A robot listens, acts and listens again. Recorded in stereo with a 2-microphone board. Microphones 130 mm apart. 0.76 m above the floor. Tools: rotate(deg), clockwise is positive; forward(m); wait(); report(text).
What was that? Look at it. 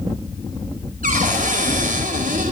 rotate(90)
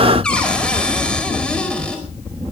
rotate(-10)
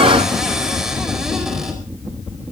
report("Found it: a cupboard door, straight ahead.")